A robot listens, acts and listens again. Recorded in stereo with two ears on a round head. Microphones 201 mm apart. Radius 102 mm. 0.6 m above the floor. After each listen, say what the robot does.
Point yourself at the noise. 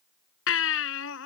Turn 60° left.
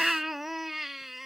Found it: a baby crying, straight ahead.